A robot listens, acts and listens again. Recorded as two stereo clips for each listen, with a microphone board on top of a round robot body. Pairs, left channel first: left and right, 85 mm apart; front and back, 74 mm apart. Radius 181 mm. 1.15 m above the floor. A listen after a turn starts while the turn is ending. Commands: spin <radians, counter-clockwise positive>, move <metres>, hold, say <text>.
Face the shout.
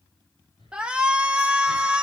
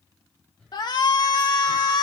spin -0.17
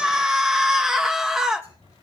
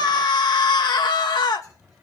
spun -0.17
say Found it: a shout, straight ahead.